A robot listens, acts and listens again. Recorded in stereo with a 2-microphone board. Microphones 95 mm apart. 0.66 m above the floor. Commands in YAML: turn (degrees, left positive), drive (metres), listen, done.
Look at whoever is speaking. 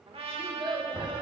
turn: -60
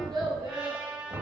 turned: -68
turn: -40
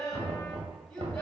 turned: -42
turn: 10
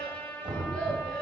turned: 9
done: "Found it: a child speaking, straight ahead, over 4 m away."